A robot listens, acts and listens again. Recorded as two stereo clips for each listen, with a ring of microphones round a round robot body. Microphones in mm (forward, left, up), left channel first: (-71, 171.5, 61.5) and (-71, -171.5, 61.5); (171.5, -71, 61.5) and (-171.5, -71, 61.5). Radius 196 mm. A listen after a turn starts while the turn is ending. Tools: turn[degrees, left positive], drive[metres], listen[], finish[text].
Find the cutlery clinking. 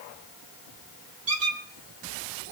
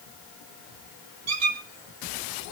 Action: listen[]
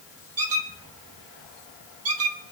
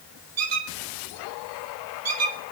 Action: listen[]
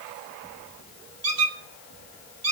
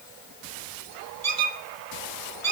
Action: finish[I can't make out cutlery clinking, only a squeak.]